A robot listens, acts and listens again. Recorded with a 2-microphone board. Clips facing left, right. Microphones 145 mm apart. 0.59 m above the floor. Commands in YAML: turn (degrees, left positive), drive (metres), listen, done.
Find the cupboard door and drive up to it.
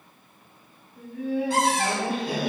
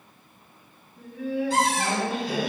turn: 55
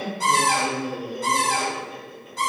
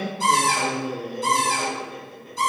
turn: 70
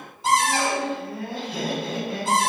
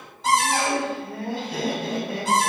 drive: 1.0
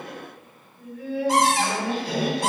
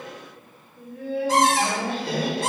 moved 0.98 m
turn: 15
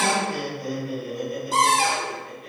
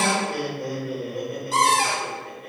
drive: 1.0
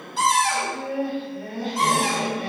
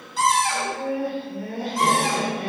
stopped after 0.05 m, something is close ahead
done: "I am next to the cupboard door."